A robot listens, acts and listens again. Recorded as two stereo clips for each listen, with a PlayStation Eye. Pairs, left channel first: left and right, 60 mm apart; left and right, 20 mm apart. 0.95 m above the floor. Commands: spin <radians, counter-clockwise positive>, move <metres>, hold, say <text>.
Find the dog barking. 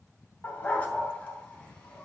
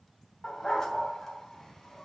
spin 0.44
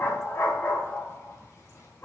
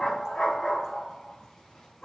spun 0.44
spin 0.61
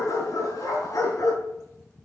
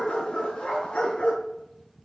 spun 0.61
spin 1.92
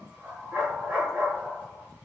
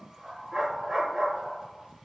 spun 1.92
spin -0.44
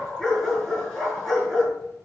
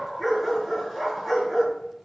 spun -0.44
say Facing the dog barking, over 4 m away.